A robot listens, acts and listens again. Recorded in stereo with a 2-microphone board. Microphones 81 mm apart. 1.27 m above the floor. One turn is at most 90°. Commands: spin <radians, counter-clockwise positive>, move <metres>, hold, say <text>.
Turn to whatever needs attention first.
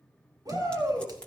spin -0.87
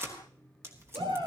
spin -1.48
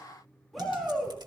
say Facing the shout.